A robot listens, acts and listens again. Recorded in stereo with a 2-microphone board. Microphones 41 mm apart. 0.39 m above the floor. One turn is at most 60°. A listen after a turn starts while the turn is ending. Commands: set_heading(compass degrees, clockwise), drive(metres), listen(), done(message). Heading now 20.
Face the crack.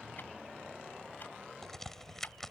set_heading(350)
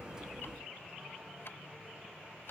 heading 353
listen()
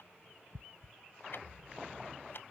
done("I heard a crack, but can't make it out now. It was about 15° right or 145° left.")